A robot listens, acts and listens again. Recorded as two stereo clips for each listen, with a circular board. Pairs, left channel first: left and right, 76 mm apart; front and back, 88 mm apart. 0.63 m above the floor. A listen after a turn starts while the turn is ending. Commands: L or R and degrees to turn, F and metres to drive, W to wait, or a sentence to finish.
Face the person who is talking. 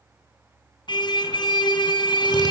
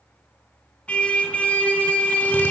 W
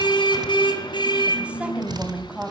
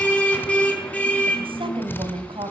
R165
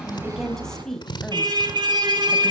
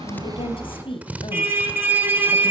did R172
L10
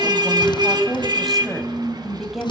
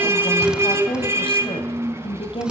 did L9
Facing the woman speaking, 2 to 4 m away.